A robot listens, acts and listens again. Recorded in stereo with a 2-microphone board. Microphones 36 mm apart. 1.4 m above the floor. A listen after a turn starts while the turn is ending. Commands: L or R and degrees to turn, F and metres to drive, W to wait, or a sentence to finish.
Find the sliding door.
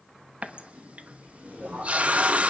R45
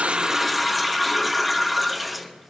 W
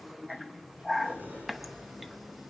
R90
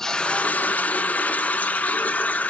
W
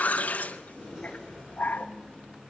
R35
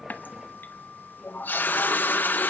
Facing the sliding door, over 4 m away.